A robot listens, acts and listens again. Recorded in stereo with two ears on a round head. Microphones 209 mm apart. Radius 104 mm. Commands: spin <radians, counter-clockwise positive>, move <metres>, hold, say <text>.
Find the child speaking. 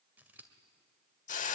hold
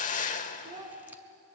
spin -0.26
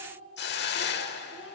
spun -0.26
spin -0.52
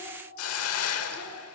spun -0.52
hold
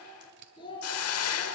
spin 0.35
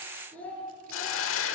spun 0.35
say Facing the child speaking.